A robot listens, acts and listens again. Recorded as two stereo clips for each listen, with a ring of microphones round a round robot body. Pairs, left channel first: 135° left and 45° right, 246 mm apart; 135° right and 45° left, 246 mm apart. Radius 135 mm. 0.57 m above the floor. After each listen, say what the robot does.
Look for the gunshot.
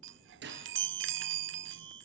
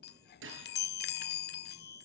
Found it: a gunshot, straight ahead.